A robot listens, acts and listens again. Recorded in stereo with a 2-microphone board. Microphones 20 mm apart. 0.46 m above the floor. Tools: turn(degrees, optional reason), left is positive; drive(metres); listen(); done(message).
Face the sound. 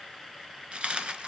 turn(degrees=-55, reason="The dropped coin: about 55° right or 125° right.")
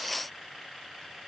listen()
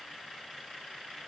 done("I heard a dropped coin, but can't make it out now. It was about straight ahead or 70° right.")